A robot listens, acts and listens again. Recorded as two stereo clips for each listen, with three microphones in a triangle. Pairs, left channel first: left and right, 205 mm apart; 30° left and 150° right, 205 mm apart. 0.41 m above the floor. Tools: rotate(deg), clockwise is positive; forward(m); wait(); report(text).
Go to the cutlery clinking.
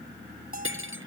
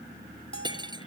rotate(80)
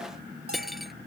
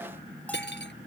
forward(1.0)
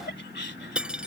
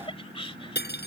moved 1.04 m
forward(1.0)
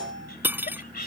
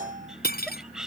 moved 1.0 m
rotate(10)
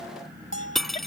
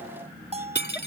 forward(1.0)
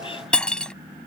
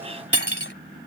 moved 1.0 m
forward(1.0)
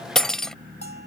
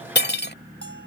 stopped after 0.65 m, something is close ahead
report("Arrived at the cutlery clinking, straight ahead.")